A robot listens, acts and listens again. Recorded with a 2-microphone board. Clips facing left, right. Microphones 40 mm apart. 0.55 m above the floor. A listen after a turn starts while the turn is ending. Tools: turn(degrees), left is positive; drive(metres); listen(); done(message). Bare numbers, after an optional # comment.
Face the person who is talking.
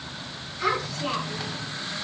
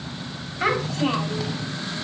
# The child speaking: about 50° right or 130° right.
turn(-50)
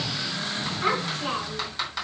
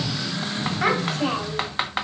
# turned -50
# So it is at 80° right.
turn(-80)
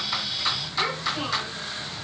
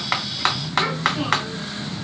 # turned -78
listen()
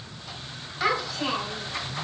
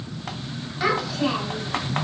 done("Facing the child speaking.")